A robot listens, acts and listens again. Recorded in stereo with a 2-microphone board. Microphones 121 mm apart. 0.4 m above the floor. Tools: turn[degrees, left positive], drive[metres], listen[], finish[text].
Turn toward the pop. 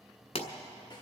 Thought: The pop: about 65° left or 115° left.
Action: turn[65]
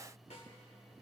Action: listen[]
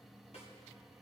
Action: finish[I heard a pop, but can't make it out now. It was about straight ahead or 50° left.]